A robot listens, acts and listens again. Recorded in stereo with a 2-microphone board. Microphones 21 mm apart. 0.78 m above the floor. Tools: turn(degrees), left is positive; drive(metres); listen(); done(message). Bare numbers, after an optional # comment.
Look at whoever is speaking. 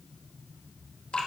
listen()
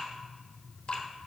listen()
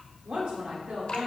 # The woman speaking: about 55° right or 125° right.
turn(-55)
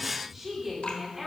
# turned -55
# So it is at 10° right.
turn(-10)
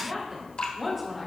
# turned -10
done("Facing the woman speaking.")